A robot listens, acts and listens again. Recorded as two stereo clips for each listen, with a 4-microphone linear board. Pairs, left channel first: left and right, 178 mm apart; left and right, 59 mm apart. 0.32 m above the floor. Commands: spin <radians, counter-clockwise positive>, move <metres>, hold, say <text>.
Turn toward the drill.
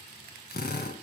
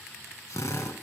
spin 1.05
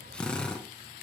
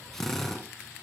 say Facing the drill.